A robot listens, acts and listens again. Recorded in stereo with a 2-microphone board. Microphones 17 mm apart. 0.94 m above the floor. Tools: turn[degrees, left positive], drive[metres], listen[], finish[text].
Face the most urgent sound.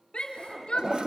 Thought: The shout: about 75° left or 105° left.
Action: turn[75]
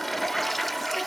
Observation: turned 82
Action: listen[]
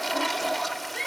Thought: So it is at 20° left.
Action: turn[20]
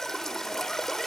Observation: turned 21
Action: listen[]
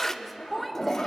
Action: finish[Found it: a shout, straight ahead.]